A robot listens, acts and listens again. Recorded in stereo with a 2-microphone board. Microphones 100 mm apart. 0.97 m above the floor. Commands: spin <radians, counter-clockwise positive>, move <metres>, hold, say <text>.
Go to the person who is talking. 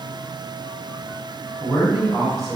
spin -0.52
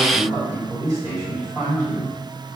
spin -2.53
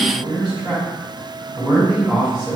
move 1.0
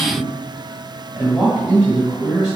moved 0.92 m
move 1.0
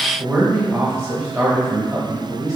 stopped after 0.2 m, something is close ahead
spin -0.17
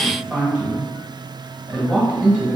say I am next to the man speaking.